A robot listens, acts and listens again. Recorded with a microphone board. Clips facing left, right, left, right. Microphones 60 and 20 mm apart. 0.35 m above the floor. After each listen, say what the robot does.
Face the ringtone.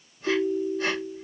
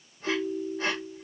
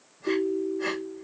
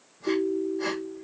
Turn 30° left.
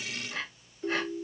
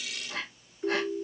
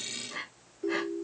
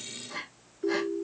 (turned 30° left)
Turn 30° right.
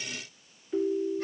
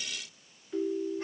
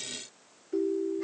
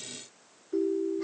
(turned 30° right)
Turn 10° left.
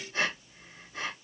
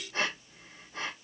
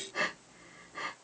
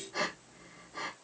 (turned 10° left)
Keep listening.
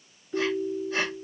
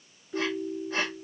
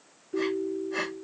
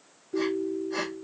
Found it: a ringtone, straight ahead, 1 to 2 m away.